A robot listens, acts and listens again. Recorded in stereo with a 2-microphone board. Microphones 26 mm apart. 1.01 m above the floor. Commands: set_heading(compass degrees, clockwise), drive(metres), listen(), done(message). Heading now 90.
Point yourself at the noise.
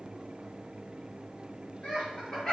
set_heading(60)
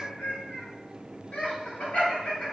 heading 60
set_heading(305)
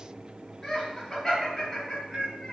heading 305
set_heading(290)
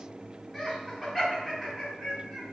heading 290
done("Found it: laughter, straight ahead.")